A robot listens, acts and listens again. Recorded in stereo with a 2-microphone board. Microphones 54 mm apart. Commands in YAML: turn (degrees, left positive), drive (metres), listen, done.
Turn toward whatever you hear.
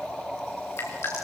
turn: 55
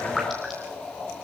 listen: true
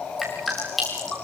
done: "Facing the dripping, over 4 m away."